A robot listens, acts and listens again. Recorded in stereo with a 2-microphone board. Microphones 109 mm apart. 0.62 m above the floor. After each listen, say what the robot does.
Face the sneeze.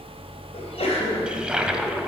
Turn 75° left.
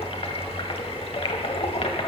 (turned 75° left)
Keep listening.
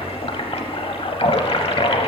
I heard a sneeze, but can't make it out now. It was about straight ahead or 30° left.